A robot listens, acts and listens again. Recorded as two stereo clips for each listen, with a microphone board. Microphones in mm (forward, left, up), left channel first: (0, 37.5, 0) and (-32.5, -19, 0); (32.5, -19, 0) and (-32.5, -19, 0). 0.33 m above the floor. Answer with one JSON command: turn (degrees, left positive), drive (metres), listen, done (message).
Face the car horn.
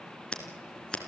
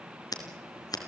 {"listen": true}
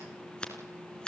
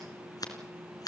{"listen": true}
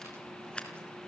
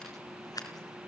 {"done": "I can't make out a car horn, only scissors."}